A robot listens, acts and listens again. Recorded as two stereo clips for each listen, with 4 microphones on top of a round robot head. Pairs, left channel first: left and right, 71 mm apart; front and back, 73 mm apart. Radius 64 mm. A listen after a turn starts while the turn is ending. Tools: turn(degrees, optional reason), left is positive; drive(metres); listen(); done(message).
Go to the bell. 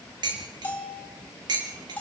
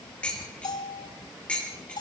turn(degrees=20, reason="The bell: 20° left.")
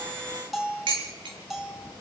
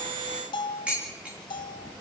drive(metres=1.0)
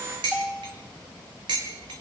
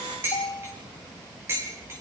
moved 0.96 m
turn(degrees=-10, reason="The bell is now 10° right.")
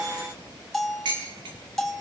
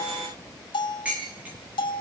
drive(metres=1.0)
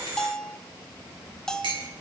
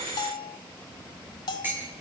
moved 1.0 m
turn(degrees=10, reason="The bell is now 10° left.")
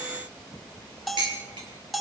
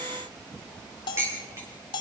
drive(metres=1.0)
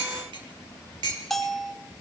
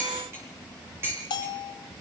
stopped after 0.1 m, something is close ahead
done("Arrived at the bell, straight ahead.")